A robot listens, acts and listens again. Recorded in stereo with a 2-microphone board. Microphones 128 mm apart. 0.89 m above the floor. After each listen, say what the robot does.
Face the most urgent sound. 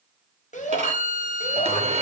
Turn 90° left.
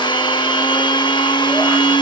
Keep listening.
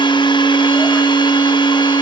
Keep listening.
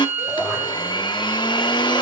Facing the shout, over 4 m away.